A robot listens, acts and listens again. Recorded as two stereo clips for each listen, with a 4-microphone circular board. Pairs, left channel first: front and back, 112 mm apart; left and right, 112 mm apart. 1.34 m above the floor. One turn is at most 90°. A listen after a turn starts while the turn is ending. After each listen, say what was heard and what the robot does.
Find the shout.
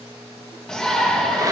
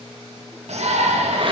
The shout: 85° right. Turn 85° right.
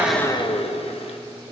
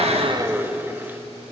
Keep listening.
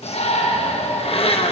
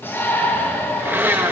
The shout is now 20° left. Turn 20° left.
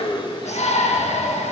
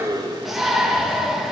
Facing the shout.